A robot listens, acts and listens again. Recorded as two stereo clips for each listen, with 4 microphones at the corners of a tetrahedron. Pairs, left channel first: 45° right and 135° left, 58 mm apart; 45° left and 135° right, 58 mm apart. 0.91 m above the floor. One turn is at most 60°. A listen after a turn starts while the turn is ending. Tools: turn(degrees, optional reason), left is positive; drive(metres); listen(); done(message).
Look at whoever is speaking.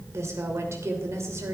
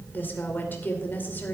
turn(degrees=60, reason="The woman speaking: 100° left.")
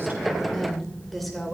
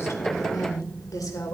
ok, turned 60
turn(degrees=45, reason="The woman speaking is now 45° left.")
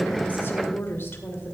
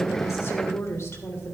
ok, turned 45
done("Facing the woman speaking.")